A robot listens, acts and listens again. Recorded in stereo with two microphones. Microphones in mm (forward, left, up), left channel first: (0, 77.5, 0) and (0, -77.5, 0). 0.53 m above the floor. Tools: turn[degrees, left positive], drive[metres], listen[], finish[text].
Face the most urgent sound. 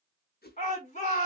Thought: The shout: about 55° left or 125° left.
Action: turn[55]
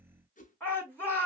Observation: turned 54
Thought: So it is at 10° left.
Action: turn[10]
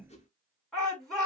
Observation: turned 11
Action: finish[Facing the shout.]